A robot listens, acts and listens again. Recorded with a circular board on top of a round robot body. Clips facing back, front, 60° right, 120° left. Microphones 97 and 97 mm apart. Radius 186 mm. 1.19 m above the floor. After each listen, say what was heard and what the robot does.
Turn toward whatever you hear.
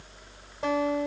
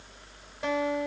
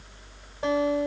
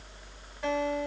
The guitar: 125° right. Turn 125° right.
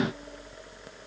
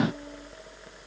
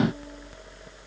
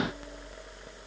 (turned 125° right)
Keep listening.
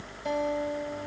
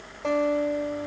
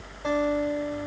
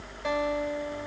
Found it: a guitar, straight ahead.